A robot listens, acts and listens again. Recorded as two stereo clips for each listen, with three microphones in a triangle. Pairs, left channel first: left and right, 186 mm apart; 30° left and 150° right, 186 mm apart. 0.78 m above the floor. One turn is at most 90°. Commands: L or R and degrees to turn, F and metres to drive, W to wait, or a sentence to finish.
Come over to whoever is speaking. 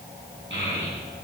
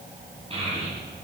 R90
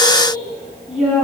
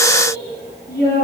F1.0
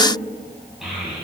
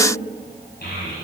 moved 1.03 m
F1.0
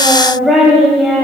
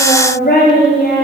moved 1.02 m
F1.0
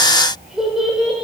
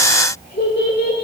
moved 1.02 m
F1.0
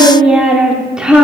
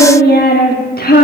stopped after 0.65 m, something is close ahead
Arrived at the child speaking, straight ahead.